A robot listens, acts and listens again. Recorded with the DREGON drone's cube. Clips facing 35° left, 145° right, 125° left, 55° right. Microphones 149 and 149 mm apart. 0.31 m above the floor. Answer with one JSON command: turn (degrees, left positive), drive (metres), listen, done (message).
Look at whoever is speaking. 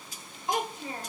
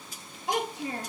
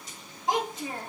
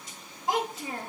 {"turn": -145}
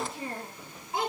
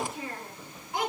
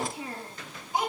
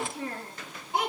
{"turn": -30}
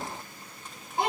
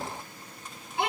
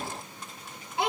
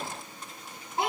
{"turn": -10}
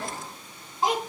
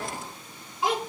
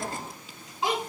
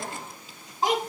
{"turn": -15}
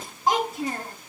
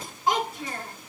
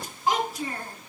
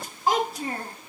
{"turn": -10}
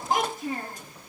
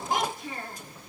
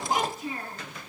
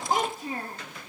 {"done": "Facing the child speaking."}